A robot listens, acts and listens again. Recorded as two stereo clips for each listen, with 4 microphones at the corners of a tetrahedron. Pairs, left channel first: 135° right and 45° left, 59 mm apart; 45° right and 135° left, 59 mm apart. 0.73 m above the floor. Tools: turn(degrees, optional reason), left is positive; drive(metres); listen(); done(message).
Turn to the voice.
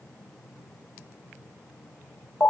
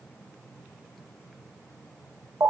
listen()
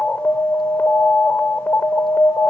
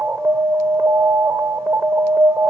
listen()
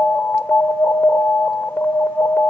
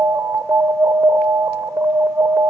done("I can't make out anyone speaking, only an alarm.")